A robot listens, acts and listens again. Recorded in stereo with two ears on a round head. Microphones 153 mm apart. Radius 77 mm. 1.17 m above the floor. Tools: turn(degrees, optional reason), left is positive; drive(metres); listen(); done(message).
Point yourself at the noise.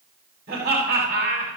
turn(degrees=-60, reason="The laughter: about 60° right or 120° right.")
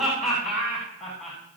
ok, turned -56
done("Found it: laughter, straight ahead, over 4 m away.")